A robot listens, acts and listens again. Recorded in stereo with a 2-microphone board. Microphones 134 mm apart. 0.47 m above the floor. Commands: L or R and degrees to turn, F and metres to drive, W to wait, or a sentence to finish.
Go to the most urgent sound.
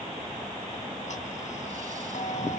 W
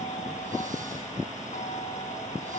W
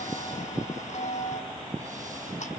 I can't make out anything urgent, only ticking.